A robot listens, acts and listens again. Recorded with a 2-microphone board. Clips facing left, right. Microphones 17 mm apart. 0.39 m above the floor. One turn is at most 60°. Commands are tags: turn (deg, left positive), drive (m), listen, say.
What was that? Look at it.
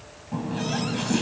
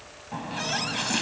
<turn deg="-20"/>
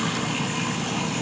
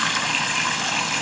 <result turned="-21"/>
<turn deg="-60"/>
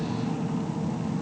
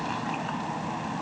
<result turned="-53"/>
<turn deg="-60"/>
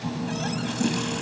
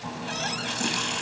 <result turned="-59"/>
<turn deg="-25"/>
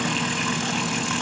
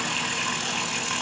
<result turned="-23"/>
<say>Facing the running tap.</say>